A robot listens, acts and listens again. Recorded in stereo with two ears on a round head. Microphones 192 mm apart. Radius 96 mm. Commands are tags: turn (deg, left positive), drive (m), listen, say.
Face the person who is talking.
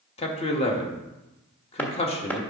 <turn deg="30"/>
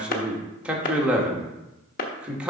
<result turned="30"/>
<say>Facing the man speaking, 1 to 2 m away.</say>